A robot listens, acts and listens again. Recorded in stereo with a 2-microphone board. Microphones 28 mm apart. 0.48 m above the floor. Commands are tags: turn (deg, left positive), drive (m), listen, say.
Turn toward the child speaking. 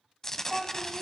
<turn deg="30"/>
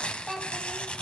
<turn deg="-10"/>
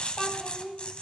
<turn deg="15"/>
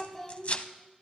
<turn deg="15"/>
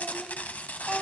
<turn deg="10"/>
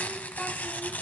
<listen/>
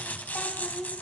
<say>Facing the child speaking.</say>